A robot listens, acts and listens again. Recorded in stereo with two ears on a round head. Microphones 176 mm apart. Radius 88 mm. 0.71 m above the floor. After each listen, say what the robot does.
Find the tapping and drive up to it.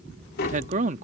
Turn 50° left.
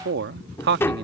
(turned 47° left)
Turn 15° left.
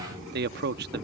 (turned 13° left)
Keep listening.
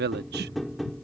Drive 1.0 m forward.
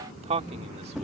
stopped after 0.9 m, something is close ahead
I am next to the tapping.